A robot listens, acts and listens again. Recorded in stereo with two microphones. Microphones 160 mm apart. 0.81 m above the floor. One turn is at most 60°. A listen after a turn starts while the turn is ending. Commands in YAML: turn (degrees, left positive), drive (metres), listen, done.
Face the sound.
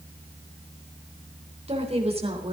turn: -40
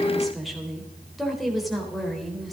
done: "Found it: a woman speaking, straight ahead."